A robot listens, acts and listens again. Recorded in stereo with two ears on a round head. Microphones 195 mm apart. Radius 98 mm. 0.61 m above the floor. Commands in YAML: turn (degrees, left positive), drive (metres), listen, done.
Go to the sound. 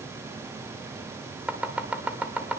turn: -30
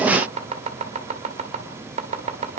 turn: -140
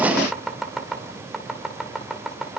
drive: 1.0
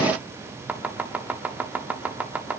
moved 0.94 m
turn: -10
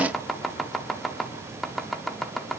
drive: 1.0
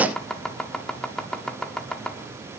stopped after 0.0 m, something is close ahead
done: "I am next to the chopping."